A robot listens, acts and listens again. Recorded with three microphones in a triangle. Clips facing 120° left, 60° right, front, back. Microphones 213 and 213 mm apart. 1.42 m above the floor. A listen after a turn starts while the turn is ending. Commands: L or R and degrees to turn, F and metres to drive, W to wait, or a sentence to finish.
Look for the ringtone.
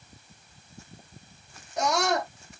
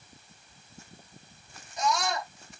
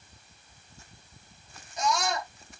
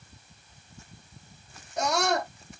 W
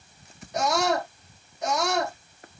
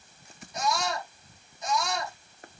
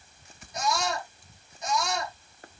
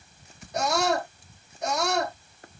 W
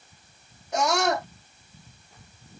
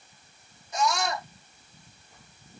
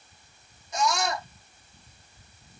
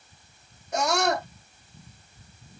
I can't make out a ringtone to turn to.